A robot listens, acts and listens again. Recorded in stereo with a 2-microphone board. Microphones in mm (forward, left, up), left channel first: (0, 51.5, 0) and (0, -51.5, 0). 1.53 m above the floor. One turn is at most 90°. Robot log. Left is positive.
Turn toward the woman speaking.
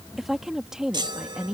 cmd yaw -30
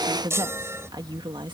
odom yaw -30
note: So it is at 130° right.
cmd yaw -90
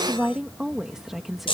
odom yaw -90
end: Found it: a woman speaking, straight ahead.